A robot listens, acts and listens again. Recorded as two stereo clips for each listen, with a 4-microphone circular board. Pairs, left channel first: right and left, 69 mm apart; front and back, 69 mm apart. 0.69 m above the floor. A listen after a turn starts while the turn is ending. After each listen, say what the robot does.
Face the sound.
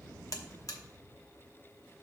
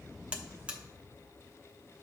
Turn 110° right.
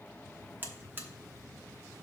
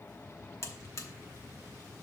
Turn 35° left.
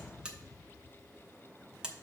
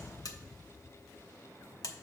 Turn 15° left.
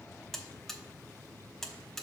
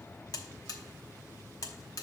Found it: a buzzer, straight ahead, under 1 m away.